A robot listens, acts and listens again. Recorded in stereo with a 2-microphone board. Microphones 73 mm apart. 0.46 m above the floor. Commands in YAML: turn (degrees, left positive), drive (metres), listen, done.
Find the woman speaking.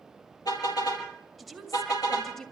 turn: 30
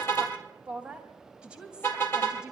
turn: -10
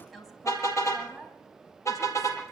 done: "Found it: a woman speaking, straight ahead."